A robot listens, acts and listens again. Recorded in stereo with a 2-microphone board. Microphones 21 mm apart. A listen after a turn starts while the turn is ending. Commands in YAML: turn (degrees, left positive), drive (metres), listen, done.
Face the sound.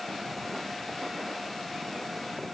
listen: true
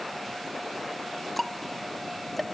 turn: 30
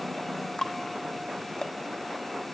turn: 145
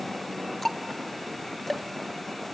turn: 15
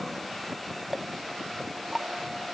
done: "Found it: ticking, straight ahead, under 1 m away."